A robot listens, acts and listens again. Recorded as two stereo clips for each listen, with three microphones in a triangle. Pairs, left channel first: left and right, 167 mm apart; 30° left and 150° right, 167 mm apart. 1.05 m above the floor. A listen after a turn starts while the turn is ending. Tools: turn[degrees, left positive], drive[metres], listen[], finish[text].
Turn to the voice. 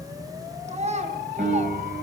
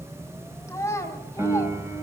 Thought: The child speaking: 45° right.
Action: turn[-45]
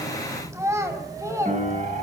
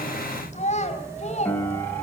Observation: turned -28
Thought: The child speaking is now 20° right.
Action: turn[-20]
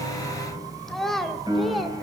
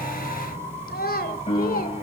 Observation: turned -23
Action: finish[Facing the child speaking, 2 to 4 m away.]